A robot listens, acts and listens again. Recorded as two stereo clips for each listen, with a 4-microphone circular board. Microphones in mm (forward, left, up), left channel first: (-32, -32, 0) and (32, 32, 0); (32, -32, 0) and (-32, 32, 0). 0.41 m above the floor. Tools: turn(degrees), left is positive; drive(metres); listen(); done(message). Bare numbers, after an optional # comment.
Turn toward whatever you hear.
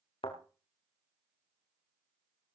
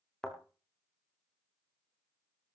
# The thud: 130° right.
turn(-130)
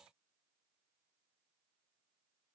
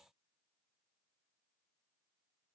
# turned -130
done("Facing where the thud came from. I can't hear it now.")